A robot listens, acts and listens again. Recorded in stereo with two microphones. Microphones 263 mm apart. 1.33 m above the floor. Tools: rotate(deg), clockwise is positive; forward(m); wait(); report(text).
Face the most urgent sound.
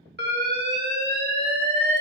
rotate(40)
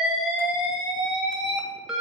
report("Found it: an alarm, straight ahead.")